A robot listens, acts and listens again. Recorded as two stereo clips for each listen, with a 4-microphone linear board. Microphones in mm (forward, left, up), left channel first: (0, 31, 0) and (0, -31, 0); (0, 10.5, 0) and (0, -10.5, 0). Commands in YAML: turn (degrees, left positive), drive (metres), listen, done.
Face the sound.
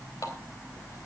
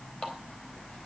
turn: 65
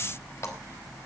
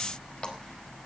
listen: true
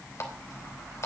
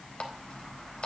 turn: 50
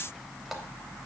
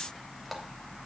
listen: true
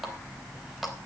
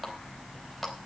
done: "Found it: a running tap, straight ahead."